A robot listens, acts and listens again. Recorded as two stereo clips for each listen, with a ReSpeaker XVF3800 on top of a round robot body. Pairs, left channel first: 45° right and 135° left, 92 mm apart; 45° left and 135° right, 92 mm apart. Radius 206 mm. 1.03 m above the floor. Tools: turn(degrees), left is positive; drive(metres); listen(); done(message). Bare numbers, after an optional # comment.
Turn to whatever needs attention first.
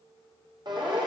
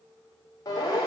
# The siren: 95° left.
turn(95)
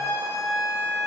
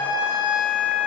# The siren is now 15° left.
turn(15)
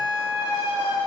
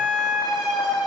done("Found it: a siren, straight ahead.")